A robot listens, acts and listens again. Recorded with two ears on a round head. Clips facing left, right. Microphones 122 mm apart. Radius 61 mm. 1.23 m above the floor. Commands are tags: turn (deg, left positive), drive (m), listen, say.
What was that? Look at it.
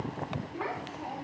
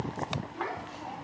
<turn deg="20"/>
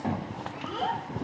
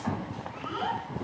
<turn deg="30"/>
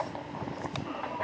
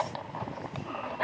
<turn deg="125"/>
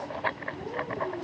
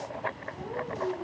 <turn deg="35"/>
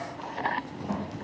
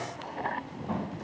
<turn deg="10"/>
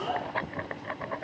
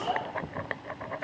<say>Found it: a child speaking, straight ahead, over 4 m away.</say>